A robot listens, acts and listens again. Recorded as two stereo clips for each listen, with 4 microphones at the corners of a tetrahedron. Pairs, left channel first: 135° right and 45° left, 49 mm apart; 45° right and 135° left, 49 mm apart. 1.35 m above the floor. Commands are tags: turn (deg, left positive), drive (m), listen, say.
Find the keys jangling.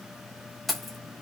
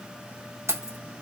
<turn deg="135"/>
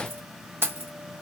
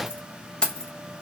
<turn deg="25"/>
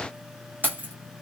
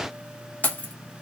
<say>Facing the keys jangling, under 1 m away.</say>